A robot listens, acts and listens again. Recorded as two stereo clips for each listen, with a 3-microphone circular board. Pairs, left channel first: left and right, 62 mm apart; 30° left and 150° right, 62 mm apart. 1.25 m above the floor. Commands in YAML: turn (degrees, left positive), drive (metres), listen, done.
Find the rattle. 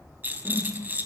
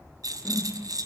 turn: -150
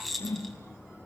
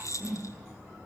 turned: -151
done: "Found it: a rattle, straight ahead."